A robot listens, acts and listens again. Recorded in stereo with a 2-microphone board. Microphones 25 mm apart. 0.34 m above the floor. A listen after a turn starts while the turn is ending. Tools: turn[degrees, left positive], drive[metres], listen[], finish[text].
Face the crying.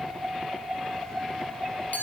Action: listen[]
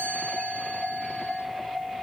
Action: listen[]
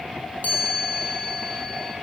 Action: finish[I can't make out crying to turn to.]